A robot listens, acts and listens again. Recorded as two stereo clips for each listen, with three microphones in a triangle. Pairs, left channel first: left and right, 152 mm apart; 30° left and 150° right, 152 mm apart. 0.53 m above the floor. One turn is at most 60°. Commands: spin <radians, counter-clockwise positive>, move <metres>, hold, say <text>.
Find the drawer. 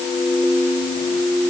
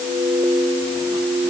hold
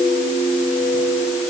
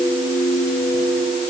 hold
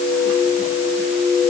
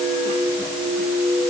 say I can't make out a drawer to turn to.